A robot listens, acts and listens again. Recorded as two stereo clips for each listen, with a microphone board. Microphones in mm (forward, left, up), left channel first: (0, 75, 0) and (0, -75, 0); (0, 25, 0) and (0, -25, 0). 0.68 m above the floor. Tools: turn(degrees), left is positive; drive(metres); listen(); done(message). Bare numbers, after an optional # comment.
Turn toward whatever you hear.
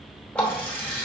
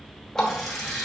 turn(30)
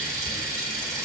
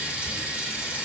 # So it is at 20° right.
turn(-20)
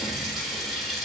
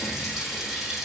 done("Found it: a running tap, straight ahead, 1 to 2 m away.")